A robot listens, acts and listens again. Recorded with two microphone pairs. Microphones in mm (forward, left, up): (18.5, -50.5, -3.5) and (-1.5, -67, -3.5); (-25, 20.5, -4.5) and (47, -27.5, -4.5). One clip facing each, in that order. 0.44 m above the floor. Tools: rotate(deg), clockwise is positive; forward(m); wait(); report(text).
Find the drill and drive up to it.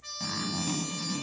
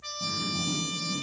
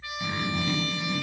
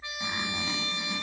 wait()
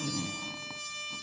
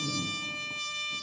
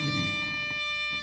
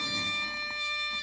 wait()
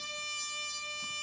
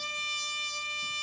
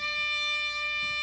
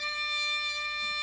report("I can't make out a drill, only a zipper and a trumpet.")